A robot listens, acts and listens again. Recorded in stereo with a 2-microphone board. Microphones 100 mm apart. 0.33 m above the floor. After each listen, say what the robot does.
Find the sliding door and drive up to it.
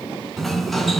Turn 30° left.
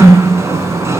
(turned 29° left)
Turn 30° right.
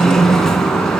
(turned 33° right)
Drive 1.0 m forward.
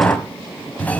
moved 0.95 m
Turn 20° left.
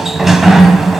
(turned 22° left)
Drive 1.0 m forward.
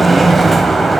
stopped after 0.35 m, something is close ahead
I am next to the sliding door.